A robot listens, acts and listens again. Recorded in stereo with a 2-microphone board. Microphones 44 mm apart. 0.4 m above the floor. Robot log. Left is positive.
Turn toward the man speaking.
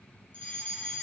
cmd idle
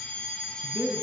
note: The man speaking: about 60° right or 120° right.
cmd yaw -60
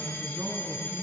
note: So it is at 60° right.
cmd yaw -60
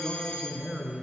note: The man speaking is now 15° right.
cmd yaw -15
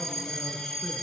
cmd idle
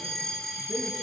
cmd idle
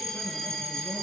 end: I heard a man speaking from this way, but can't make it out now.